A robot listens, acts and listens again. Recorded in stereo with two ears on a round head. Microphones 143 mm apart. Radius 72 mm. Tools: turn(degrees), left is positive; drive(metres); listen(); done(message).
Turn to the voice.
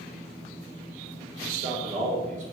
turn(degrees=-45)
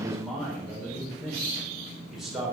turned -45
done("Facing the man speaking, 2 to 4 m away.")